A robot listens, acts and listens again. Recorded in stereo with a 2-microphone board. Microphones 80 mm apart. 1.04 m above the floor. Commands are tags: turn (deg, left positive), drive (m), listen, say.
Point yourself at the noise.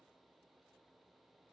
<listen/>
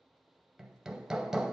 <turn deg="-30"/>
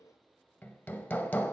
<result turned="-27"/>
<turn deg="25"/>
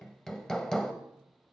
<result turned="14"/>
<turn deg="10"/>
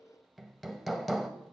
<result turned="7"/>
<say>Found it: hammering, straight ahead.</say>